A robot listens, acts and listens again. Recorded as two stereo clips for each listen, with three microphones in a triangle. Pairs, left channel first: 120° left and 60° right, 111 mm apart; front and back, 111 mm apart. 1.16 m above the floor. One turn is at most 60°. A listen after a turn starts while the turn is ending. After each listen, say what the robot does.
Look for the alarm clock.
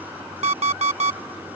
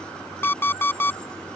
Turn 60° right.
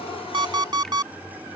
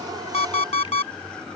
Turn 10° right.
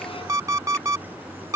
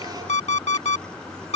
Facing the alarm clock.